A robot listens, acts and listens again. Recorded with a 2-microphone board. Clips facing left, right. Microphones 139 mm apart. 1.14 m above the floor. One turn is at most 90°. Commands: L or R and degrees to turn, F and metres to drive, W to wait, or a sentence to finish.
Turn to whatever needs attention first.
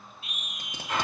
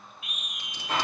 L35
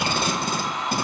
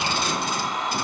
W
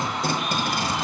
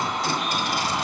W
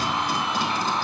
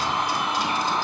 I heard a scream, but can't make it out now. It was about straight ahead or 110° left.